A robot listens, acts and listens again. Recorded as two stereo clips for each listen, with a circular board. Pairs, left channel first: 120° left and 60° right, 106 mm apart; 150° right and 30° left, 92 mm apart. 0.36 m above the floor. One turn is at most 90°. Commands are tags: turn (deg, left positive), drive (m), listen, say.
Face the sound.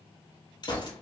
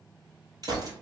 <turn deg="75"/>
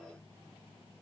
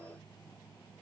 <say>I heard a gunshot from this way, but can't make it out now.</say>